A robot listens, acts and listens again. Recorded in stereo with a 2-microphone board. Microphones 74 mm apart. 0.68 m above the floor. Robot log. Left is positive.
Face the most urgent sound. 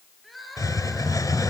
cmd yaw +30
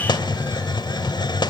cmd idle
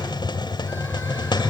cmd idle
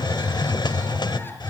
end: I heard crying, but can't make it out now. It was about 30° right or 150° left.